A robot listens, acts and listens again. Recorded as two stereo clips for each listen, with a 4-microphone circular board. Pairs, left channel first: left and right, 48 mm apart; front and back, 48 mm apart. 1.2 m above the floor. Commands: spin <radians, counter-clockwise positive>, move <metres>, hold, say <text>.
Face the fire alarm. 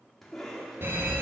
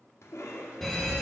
spin -1.48
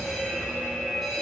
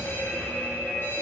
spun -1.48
say Found it: a fire alarm, straight ahead.